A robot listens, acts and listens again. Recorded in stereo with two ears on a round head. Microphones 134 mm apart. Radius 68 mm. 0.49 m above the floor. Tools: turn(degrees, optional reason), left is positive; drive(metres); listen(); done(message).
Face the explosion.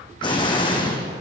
turn(degrees=35, reason="The explosion: about 35° left or 145° left.")
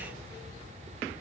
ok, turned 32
listen()
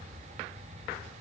done("I heard an explosion, but can't make it out now. It was about straight ahead or 115° left.")